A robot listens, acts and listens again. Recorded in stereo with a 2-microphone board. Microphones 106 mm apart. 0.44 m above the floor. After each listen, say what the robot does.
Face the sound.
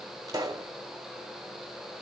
Turn 35° right.
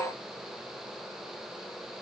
Keep listening.
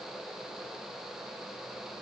I heard a pop, but can't make it out now. It was about straight ahead or 110° right.